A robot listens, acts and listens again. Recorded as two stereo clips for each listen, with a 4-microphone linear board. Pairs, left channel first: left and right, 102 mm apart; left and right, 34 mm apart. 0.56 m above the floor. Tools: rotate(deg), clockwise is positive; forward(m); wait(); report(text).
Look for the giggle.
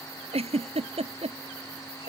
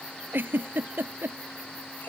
rotate(90)
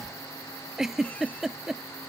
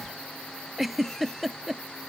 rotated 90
report("Found it: a giggle, straight ahead.")